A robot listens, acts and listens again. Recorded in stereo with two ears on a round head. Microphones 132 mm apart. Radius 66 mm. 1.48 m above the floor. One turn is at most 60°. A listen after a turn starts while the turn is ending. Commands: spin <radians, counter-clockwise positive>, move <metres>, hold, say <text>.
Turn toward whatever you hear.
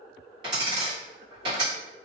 spin -0.61
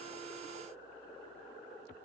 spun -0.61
hold
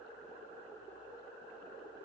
say I heard a dropped coin, but can't make it out now. It was about straight ahead or 110° right.